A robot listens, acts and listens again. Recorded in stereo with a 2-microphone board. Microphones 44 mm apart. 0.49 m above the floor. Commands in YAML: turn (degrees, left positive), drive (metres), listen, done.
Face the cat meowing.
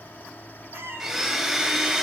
turn: -65
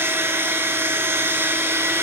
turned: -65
listen: true
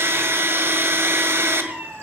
turn: -55
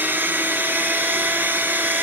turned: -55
listen: true
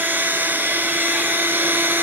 listen: true
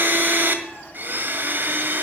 done: "Facing where the cat meowing came from. I can't hear it now."